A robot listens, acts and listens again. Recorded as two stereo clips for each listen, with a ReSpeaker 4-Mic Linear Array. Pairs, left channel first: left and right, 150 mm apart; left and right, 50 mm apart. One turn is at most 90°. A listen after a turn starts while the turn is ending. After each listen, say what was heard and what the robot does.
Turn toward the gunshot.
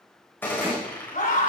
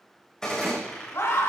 Turn 30° left.
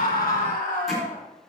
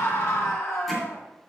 Keep listening.
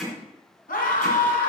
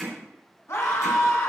I heard a gunshot, but can't make it out now. It was about 15° right or 135° left.